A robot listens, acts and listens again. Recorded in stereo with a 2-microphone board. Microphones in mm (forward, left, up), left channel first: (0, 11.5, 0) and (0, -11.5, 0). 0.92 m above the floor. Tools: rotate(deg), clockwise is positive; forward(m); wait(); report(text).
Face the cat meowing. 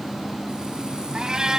rotate(30)
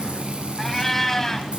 rotate(-20)
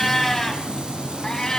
rotate(-35)
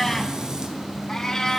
rotate(-30)
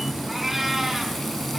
report("Found it: a cat meowing, straight ahead.")